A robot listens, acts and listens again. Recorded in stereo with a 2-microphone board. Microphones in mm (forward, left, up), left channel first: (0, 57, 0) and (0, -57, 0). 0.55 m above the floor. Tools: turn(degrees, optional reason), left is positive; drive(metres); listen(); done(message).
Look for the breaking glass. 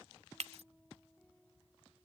turn(degrees=-75, reason="The breaking glass: about 75° right or 105° right.")
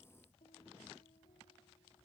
listen()
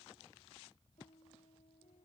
done("I heard breaking glass, but can't make it out now. It was about straight ahead or 30° right.")